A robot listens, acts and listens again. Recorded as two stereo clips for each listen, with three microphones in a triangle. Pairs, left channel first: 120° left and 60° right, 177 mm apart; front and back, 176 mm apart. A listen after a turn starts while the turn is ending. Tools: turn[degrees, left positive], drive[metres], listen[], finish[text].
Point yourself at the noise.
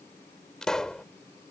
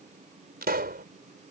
Thought: The pop: 155° right.
Action: turn[-155]
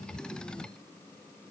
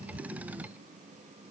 Action: finish[I heard a pop from this way, but can't make it out now.]